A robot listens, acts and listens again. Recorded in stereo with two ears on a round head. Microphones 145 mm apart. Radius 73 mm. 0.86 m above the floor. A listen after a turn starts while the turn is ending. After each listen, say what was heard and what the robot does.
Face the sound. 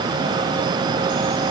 Keep listening.
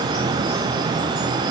Keep listening.
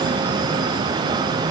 I can't make out anything to turn to.